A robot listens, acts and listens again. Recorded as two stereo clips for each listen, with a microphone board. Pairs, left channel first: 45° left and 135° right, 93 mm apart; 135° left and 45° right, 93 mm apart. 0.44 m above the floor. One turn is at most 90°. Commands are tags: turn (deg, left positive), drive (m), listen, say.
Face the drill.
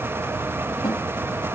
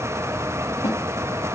<listen/>
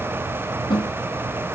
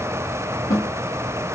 <listen/>
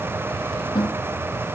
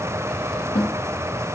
<say>I can't make out a drill, only a snare drum.</say>